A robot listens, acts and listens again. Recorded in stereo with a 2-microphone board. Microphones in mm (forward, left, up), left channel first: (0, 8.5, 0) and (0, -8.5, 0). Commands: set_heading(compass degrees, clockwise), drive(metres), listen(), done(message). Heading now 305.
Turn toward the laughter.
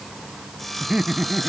set_heading(5)
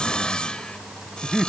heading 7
done("Facing the laughter.")